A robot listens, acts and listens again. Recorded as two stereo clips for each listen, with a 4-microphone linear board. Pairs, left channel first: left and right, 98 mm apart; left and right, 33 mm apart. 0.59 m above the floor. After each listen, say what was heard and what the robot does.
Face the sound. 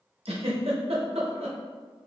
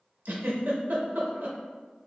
Turn 90° right.
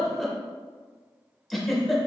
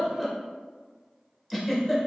Facing the giggle.